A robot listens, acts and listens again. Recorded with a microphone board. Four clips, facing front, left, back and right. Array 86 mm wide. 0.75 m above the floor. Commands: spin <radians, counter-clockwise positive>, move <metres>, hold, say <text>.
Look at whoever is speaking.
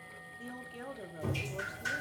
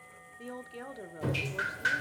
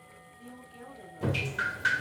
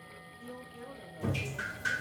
spin 1.31
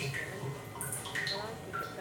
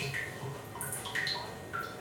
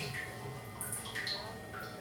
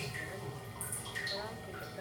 hold
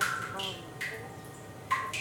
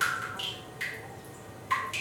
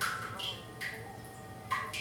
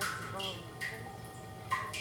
hold
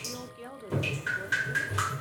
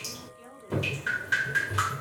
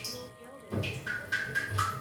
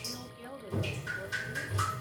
spin -0.26
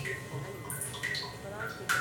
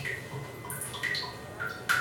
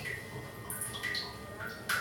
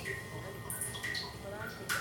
hold
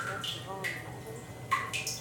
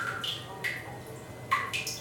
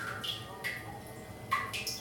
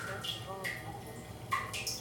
hold
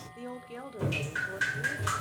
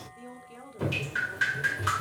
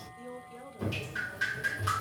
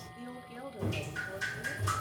say Found it: a woman speaking, straight ahead.